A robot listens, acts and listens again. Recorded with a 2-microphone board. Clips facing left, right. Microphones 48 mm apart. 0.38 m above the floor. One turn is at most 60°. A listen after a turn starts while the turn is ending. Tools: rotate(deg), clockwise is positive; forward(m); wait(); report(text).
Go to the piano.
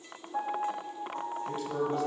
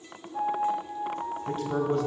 rotate(-45)
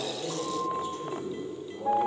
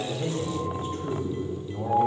rotate(-60)
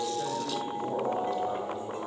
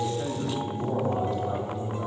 rotate(-30)
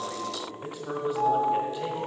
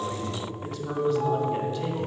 rotate(-30)
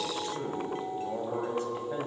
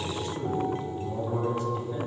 wait()
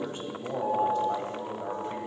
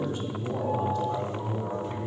forward(1.0)
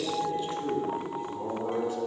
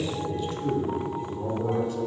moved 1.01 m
wait()
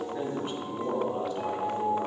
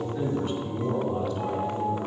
forward(1.0)
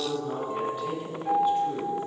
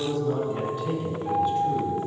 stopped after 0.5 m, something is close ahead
report("I am next to the piano.")